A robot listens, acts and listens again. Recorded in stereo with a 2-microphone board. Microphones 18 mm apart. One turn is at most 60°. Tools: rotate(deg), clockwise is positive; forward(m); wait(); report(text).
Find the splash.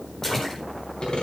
rotate(-20)
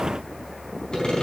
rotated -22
wait()
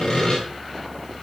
report("I heard a splash, but can't make it out now. It was about 5° right or 140° left.")